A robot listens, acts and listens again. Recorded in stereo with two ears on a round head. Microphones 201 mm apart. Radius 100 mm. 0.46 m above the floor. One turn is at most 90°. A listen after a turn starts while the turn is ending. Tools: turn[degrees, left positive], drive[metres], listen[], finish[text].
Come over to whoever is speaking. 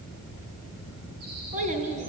Thought: The child speaking: about 35° right or 145° right.
Action: turn[-35]
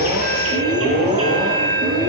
Action: listen[]
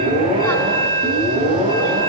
Action: listen[]
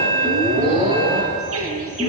Action: finish[I heard a child speaking, but can't make it out now. It was about straight ahead or 110° right. I did not reach it.]